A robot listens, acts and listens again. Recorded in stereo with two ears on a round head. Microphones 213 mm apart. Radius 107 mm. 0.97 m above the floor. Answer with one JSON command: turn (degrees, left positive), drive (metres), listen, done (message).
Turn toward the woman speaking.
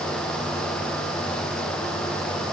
{"listen": true}
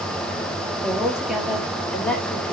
{"turn": 30}
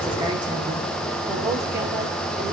{"listen": true}
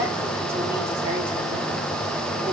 {"listen": true}
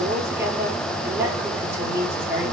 {"turn": -10}
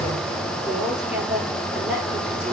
{"done": "Found it: a woman speaking, straight ahead."}